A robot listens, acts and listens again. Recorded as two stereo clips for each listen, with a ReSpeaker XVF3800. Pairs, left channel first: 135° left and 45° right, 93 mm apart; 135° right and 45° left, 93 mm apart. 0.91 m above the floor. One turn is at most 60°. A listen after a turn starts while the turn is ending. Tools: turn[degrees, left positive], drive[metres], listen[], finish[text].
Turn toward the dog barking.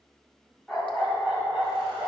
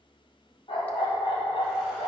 Thought: The dog barking: 120° right.
Action: turn[-60]
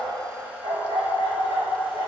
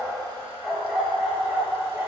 Thought: The dog barking is now 25° right.
Action: turn[-25]
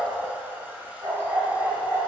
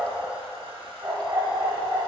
Action: finish[Found it: a dog barking, straight ahead, 1 to 2 m away.]